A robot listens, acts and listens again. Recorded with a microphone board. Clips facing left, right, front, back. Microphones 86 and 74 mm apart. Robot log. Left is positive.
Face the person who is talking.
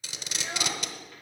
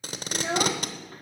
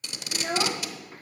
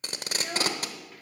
note: The child speaking: 50° right.
cmd yaw -50
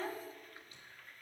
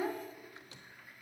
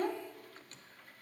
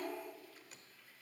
note: The child speaking is now 10° right.
cmd yaw -10
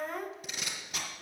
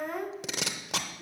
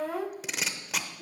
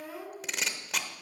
end: Facing the child speaking, under 1 m away.